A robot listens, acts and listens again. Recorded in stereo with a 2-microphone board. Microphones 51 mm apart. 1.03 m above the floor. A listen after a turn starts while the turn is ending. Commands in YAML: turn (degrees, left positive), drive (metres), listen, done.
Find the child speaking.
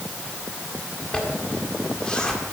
listen: true
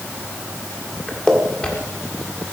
listen: true
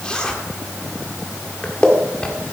done: "I can't make out a child speaking, only a zipper."